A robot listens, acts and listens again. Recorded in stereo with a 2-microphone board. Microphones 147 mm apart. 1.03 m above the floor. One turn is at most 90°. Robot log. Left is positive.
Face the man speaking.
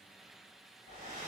cmd idle
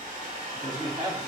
note: The man speaking: about 25° right or 155° right.
cmd yaw -25
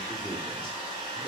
cmd idle
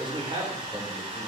note: The man speaking: about 30° right or 150° right.
cmd yaw -30
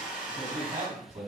note: So it is at 130° right.
cmd yaw -90
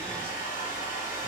note: Nothing new. It was at 40° right.
cmd yaw -40
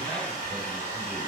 cmd idle
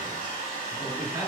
note: The man speaking is now 10° right.
cmd yaw -10
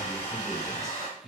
end: Facing the man speaking, over 4 m away.